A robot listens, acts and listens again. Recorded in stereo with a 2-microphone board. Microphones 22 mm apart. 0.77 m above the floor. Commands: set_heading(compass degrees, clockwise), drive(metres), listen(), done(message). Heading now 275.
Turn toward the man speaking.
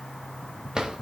listen()
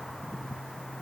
listen()
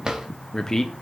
set_heading(250)
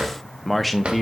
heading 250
done("Facing the man speaking.")